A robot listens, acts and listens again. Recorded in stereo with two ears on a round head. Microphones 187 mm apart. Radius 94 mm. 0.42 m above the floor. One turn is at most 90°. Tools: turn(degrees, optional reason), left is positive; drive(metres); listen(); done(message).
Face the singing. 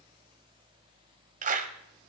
listen()
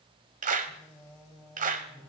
turn(degrees=-30)
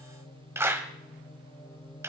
turn(degrees=20, reason="So it is at 20° left.")
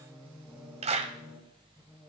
done("Found it: singing, straight ahead, 2 to 4 m away.")